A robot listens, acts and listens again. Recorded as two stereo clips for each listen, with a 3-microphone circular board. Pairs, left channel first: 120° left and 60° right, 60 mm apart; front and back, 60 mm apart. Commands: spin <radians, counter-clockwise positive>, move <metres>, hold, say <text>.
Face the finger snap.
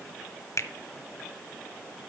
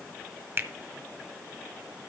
spin 2.36
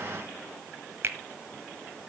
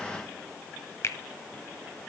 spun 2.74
spin -0.35
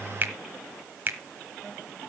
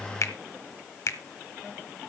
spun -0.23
say Facing the finger snap.